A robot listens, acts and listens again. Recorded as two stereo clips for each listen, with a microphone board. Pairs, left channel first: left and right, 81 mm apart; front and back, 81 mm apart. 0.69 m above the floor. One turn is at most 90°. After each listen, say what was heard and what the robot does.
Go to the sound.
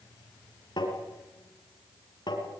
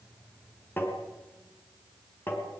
The tapping: 65° left. Turn 65° left.
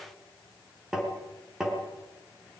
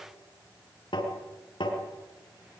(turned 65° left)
Drive 1.0 m forward.
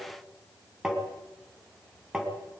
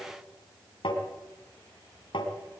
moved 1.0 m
Drive 1.0 m forward.
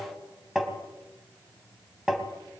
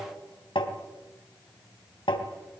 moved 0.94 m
Drive 1.0 m forward.
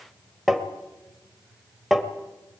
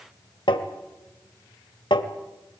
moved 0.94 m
Drive 1.0 m forward.
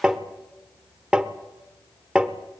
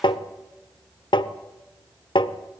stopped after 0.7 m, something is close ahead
The tapping is now 10° right. Turn 10° right.
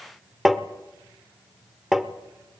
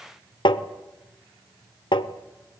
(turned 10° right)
Arrived at the tapping, straight ahead.